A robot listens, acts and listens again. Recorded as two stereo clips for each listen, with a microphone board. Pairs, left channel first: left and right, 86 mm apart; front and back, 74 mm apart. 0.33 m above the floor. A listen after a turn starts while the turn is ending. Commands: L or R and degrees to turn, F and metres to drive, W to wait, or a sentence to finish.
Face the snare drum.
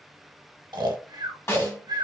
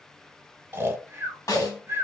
L35
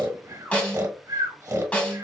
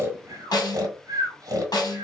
L20
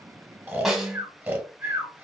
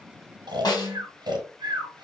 Found it: a snare drum, straight ahead, 1 to 2 m away.